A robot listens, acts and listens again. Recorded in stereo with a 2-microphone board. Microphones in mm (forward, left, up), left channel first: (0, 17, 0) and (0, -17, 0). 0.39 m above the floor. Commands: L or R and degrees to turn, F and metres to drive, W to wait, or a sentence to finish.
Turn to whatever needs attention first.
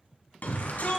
L60
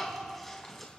L10
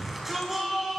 Facing the shout.